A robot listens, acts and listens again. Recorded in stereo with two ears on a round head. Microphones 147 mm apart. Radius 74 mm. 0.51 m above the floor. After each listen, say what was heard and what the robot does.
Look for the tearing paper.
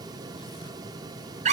Keep listening.
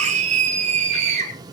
Keep listening.
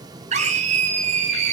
I can't make out tearing paper to turn to.